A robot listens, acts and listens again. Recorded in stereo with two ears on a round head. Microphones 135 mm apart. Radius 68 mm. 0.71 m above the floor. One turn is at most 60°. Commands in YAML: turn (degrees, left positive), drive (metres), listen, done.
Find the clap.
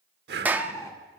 turn: -30
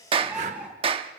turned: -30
turn: -60
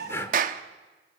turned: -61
turn: -60
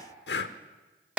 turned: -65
turn: -10
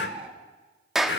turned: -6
done: "Found it: a clap, straight ahead, under 1 m away."